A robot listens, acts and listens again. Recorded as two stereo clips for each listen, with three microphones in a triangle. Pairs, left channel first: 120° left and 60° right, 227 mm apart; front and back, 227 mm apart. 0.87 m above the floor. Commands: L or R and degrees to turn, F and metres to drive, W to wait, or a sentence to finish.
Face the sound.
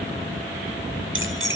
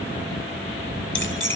R30
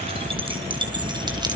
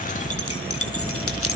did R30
L10
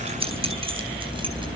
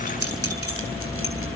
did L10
Found it: keys jangling, straight ahead.